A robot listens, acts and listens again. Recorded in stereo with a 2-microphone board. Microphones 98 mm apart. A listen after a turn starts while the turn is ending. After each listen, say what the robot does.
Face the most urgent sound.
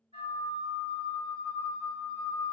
Keep listening.
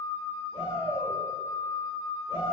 Turn 60° left.
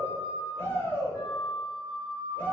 Turn 20° left.
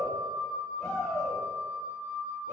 Found it: a shout, straight ahead.